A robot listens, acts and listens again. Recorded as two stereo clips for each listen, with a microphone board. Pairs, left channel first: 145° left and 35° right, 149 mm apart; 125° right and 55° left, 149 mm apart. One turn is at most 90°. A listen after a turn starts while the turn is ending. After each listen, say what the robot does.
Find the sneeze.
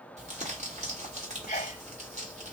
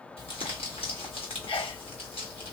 Turn 90° left.
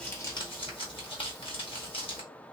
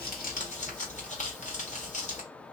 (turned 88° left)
Turn 90° left.
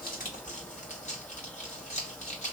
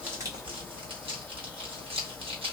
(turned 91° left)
I heard a sneeze from this way, but can't make it out now.